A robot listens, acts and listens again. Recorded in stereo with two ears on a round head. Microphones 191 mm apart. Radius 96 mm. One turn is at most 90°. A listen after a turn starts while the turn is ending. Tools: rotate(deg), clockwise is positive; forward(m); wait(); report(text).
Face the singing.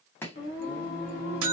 rotate(-45)
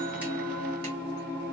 rotate(-15)
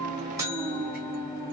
report("Found it: singing, straight ahead, 1 to 2 m away.")